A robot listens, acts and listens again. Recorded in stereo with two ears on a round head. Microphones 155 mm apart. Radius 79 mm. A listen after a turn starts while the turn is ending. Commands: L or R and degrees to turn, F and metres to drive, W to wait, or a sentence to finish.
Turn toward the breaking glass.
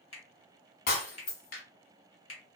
L60
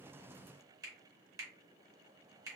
W
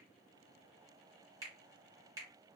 I heard breaking glass, but can't make it out now. It was about straight ahead or 60° left.